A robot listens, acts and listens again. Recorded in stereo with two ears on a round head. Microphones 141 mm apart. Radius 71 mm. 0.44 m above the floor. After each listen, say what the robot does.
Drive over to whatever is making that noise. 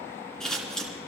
Turn 30° left.
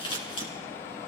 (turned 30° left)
Turn 145° left.
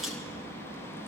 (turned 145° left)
Drive 1.0 m forward.
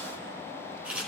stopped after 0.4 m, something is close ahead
Turn 10° right.
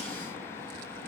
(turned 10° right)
Keep listening.
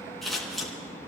Blocked. The scissors is further on, straight ahead.